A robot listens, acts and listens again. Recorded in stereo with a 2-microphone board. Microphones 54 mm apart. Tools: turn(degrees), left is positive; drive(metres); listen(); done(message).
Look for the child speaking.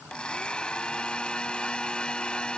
listen()
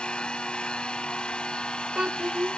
turn(degrees=-30)
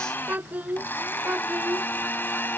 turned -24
turn(degrees=-25)
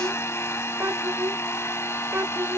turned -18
turn(degrees=-140)
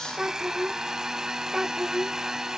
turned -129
turn(degrees=-10)
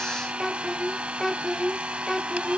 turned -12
done("Found it: a child speaking, straight ahead.")